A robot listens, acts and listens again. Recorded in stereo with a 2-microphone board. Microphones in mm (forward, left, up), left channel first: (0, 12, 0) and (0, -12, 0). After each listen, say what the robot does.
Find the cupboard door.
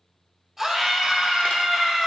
Keep listening.
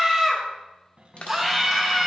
Turn 55° right.
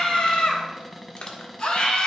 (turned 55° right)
Facing the cupboard door, 1 to 2 m away.